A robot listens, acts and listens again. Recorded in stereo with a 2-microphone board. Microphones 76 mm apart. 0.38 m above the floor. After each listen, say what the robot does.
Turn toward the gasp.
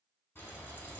Keep listening.
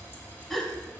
Turn 30° left.
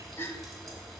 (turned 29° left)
Turn 145° left.
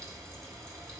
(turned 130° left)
Turn 15° left.
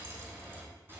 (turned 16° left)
I heard a gasp from this way, but can't make it out now.